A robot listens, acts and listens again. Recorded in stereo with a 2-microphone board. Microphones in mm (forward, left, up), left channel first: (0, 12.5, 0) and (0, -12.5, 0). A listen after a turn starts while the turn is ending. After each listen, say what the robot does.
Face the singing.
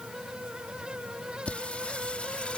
Turn 50° left.
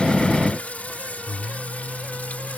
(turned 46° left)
Turn 80° left.
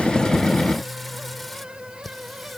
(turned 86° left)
Found it: singing, straight ahead.